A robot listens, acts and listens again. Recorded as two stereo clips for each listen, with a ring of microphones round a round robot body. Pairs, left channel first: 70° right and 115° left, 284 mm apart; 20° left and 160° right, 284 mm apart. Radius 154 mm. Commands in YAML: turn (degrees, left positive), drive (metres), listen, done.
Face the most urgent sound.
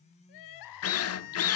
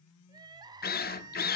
turn: -80
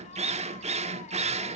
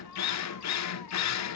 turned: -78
listen: true
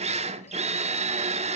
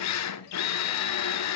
listen: true
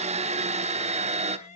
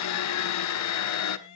done: "Found it: crying, straight ahead, under 1 m away."